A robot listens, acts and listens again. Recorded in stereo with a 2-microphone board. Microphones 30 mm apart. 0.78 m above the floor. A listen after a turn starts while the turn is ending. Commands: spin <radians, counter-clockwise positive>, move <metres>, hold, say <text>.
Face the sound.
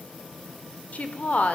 spin 0.96
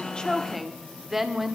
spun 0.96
say Facing the woman speaking.